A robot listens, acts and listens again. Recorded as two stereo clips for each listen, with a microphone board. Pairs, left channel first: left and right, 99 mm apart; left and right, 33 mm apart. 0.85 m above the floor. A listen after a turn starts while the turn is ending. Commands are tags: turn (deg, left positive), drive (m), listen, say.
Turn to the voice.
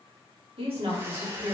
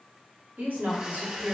<turn deg="-60"/>
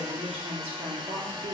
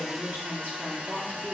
<turn deg="-75"/>
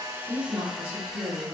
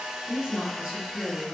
<turn deg="-20"/>
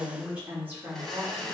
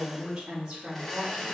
<turn deg="-15"/>
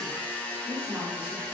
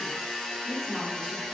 <turn deg="-10"/>
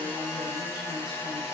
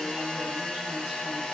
<listen/>
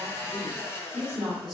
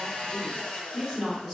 <say>Found it: a woman speaking, straight ahead, 2 to 4 m away.</say>